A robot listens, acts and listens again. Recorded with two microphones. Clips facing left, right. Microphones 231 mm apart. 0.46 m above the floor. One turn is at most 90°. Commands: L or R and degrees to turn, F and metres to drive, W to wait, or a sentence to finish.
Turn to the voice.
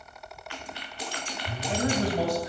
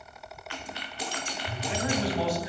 L50
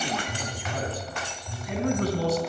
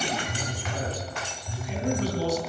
L60
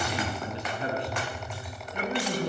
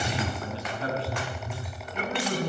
L15
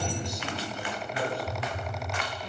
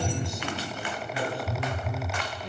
Found it: a man speaking, straight ahead.